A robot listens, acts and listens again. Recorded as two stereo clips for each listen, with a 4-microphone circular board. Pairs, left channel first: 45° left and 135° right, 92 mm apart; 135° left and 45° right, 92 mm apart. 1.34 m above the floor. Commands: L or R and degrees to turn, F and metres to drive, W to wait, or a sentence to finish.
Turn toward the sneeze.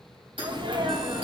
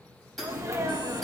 R100
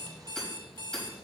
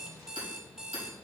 I heard a sneeze from this way, but can't make it out now.